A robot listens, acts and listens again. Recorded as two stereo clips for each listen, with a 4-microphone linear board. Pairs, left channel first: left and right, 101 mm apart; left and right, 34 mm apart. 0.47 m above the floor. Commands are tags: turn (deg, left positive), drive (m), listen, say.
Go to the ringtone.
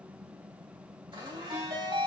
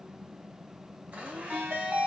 <turn deg="-65"/>
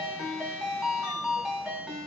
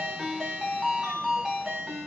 <turn deg="-10"/>
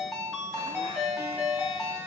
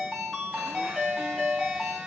<drive m="1.0"/>
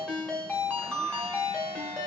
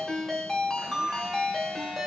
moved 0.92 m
<turn deg="10"/>
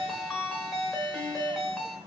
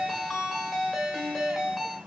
<drive m="1.0"/>
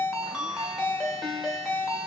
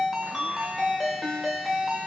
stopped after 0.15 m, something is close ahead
<say>Arrived at the ringtone, straight ahead.</say>